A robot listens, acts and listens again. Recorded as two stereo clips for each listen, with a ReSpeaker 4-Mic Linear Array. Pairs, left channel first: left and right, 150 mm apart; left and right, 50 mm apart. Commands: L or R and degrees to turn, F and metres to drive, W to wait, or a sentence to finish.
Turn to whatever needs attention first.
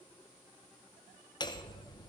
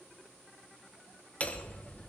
W
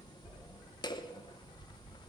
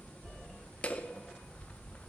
W
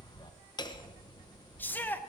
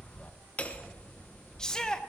L30
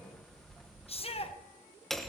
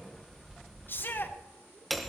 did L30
L135
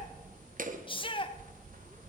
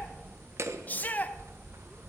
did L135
L35
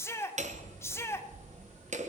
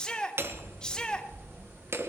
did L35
L15
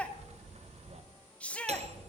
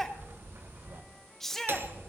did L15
L10
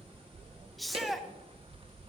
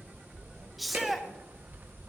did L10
Found it: a shout, straight ahead.